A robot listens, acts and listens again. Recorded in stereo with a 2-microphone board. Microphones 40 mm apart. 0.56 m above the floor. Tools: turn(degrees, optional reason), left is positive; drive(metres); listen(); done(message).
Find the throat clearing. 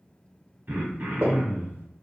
turn(degrees=-55, reason="The throat clearing: about 55° right or 125° right.")
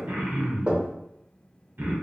turn(degrees=-65, reason="So it is at 65° right.")
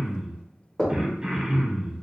turn(degrees=-30, reason="The throat clearing is now 30° right.")
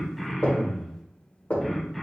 done("Facing the throat clearing.")